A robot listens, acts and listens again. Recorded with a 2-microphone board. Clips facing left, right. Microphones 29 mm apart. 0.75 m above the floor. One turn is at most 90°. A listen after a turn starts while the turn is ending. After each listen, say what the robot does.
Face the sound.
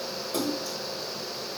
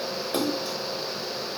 Turn 60° right.
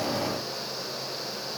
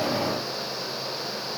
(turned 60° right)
Keep listening.
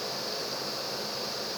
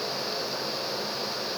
I heard a splash, but can't make it out now. It was about straight ahead or 60° right.